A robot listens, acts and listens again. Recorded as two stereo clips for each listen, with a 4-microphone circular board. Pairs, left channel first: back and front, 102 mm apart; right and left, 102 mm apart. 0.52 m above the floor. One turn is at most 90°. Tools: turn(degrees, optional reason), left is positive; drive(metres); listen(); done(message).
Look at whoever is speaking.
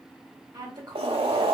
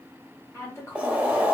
turn(degrees=-35, reason="The woman speaking: 35° right.")
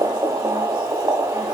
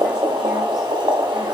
listen()
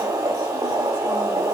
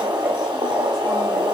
listen()
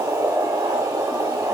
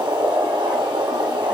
done("I heard a woman speaking from this way, but can't make it out now.")